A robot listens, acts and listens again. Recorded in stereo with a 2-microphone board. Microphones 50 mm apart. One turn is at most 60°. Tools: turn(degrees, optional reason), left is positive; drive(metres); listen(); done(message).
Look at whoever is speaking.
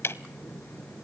listen()
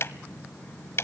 listen()
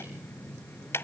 done("I can't make out anyone speaking, only ticking.")